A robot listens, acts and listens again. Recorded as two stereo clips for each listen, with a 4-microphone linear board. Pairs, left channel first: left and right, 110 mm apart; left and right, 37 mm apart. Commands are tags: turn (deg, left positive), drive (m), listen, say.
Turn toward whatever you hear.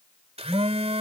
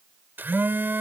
<turn deg="-70"/>
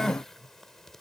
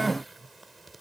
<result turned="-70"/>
<listen/>
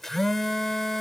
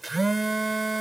<say>Found it: a phone buzzing, straight ahead.</say>